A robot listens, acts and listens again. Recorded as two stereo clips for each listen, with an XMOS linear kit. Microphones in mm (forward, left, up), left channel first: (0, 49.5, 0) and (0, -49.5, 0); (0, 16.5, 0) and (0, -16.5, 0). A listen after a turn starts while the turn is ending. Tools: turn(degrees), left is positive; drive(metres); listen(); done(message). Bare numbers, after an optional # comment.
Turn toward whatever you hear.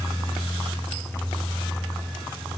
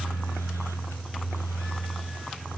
listen()
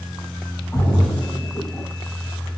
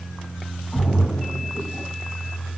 # The splash: about 30° left or 150° left.
turn(30)
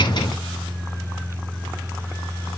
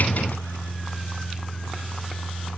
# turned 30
listen()
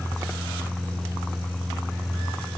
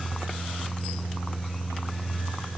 done("I heard a splash, but can't make it out now. It was about straight ahead or 120° left.")